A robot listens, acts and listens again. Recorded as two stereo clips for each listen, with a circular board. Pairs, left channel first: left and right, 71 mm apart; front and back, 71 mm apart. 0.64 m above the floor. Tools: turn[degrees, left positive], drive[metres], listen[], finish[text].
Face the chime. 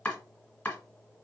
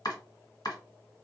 Action: listen[]
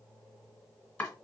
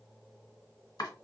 Action: listen[]
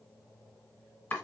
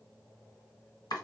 Action: finish[I can't make out a chime, only chopping.]